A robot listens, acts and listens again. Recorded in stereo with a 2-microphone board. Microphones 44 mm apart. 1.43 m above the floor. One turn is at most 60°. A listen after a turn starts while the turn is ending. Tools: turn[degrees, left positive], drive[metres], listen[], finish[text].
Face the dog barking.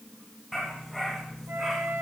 Action: turn[30]
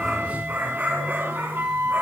Thought: So it is at 45° right.
Action: turn[-45]
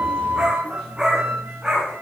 Thought: The dog barking is now 20° right.
Action: turn[-20]
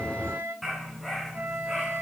Action: finish[Found it: a dog barking, straight ahead.]